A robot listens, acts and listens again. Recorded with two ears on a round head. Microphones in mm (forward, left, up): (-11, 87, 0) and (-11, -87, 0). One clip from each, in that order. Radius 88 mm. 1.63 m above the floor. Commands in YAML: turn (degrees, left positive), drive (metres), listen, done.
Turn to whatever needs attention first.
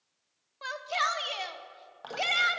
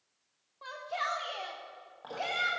turn: 55
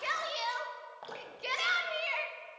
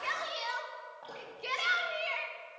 turn: 15
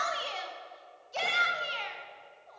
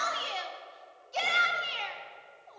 done: "Found it: a shout, straight ahead."